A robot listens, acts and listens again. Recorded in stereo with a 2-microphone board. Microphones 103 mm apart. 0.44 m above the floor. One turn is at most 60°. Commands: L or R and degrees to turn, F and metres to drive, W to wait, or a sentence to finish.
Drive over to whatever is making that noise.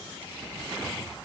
W
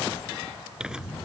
R30
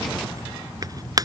R60
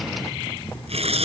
R60
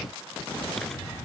F1.0
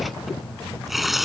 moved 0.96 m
F1.0
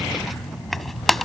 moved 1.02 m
F1.0
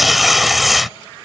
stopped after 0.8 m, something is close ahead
I am next to the tearing paper.